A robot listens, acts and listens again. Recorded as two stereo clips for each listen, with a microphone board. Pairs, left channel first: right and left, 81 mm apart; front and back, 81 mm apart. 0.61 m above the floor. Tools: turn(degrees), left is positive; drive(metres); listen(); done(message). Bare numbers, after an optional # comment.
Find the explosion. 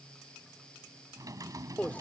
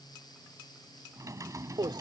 listen()
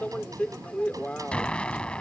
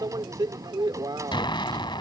# The explosion: 15° right.
turn(-15)
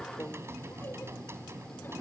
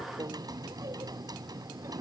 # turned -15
done("Facing where the explosion came from. I can't hear it now.")